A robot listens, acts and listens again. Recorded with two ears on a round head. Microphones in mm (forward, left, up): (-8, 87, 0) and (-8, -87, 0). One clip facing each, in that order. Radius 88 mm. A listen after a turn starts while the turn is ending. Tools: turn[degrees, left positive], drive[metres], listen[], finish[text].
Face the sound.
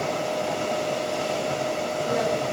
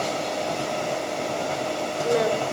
Action: turn[-90]
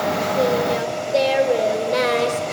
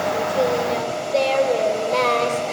Thought: So it is at 15° left.
Action: turn[15]
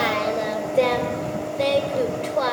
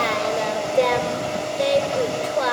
Action: finish[Facing the singing, 2 to 4 m away.]